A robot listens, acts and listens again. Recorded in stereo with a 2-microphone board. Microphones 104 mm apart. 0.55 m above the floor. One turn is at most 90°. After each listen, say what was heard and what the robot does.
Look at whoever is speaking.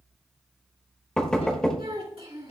The child speaking: about 65° right or 115° right. Turn 65° right.
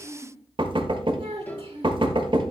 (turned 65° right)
So it is at 50° right. Turn 50° right.
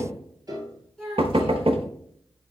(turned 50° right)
Facing the child speaking, 2 to 4 m away.